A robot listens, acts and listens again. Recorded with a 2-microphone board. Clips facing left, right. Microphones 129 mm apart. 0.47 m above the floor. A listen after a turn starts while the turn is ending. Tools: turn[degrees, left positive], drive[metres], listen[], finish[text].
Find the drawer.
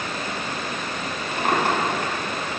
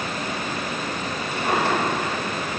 Thought: The drawer: about 55° left or 125° left.
Action: turn[55]
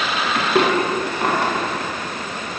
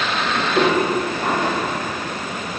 Thought: So it is at 70° left.
Action: turn[70]
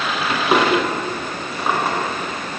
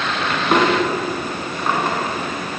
Action: finish[Facing the drawer, 2 to 4 m away.]